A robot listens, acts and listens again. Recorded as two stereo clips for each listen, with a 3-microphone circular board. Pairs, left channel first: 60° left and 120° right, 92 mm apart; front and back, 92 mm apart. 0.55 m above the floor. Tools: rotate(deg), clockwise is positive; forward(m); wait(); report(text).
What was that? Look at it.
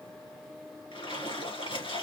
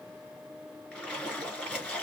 rotate(-75)
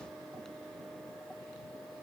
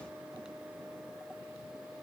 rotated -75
report("I heard a splash from this way, but can't make it out now.")